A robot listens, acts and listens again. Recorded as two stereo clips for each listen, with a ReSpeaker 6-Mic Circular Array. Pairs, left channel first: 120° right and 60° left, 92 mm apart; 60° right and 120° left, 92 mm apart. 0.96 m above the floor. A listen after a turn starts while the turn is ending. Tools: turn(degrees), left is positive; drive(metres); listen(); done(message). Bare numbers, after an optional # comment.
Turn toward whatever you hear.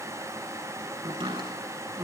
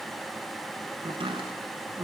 # The chopping: 90° left.
turn(90)
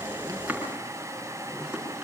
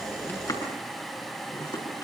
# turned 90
# The chopping is now 20° right.
turn(-20)
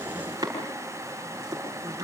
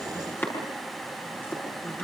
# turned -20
done("Found it: chopping, straight ahead, over 4 m away.")